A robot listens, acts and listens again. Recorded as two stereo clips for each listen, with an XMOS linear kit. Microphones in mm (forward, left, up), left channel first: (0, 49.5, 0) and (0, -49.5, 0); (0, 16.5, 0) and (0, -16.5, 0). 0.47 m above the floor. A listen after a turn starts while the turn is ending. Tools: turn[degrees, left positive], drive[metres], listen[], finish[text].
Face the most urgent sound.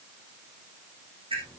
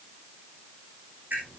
Action: listen[]
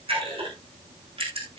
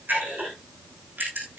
Action: listen[]
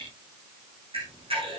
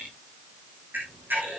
Action: finish[I can't make out anything urgent to turn to.]